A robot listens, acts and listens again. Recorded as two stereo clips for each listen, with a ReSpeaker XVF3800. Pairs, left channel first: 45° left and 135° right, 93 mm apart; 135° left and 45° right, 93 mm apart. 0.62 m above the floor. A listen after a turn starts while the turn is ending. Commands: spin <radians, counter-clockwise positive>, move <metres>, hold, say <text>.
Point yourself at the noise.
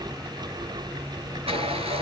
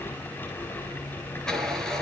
spin -2.44
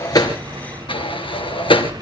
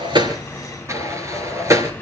spin 0.26
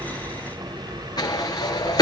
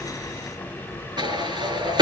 say Found it: a sliding door, straight ahead.